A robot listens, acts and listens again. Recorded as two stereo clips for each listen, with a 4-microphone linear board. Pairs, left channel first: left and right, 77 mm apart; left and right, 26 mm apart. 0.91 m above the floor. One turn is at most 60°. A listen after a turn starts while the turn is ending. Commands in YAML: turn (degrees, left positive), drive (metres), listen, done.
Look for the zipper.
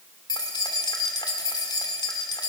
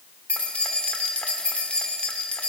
listen: true
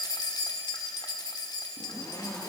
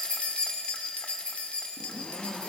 turn: 50
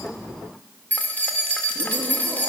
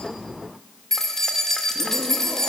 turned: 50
listen: true
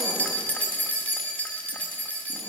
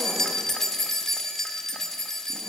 listen: true
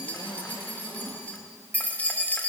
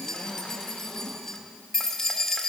turn: 60
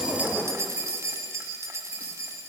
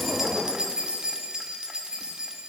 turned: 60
turn: 20
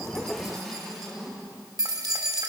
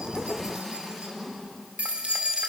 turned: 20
done: "Facing the zipper."